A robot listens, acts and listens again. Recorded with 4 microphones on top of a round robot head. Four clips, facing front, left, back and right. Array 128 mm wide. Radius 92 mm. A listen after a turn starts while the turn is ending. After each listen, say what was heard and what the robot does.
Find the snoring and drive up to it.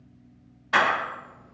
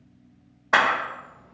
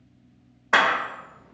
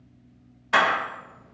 Keep listening.
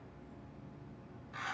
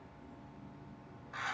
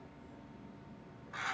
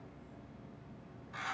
Keep listening.
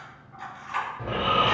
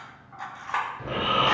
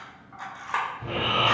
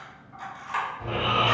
The snoring: 15° left. Turn 15° left.
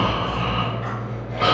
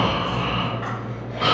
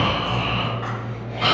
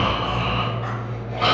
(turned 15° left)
Drive 1.0 m forward.
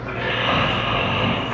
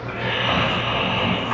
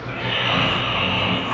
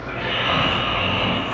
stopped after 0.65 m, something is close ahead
I am next to the snoring.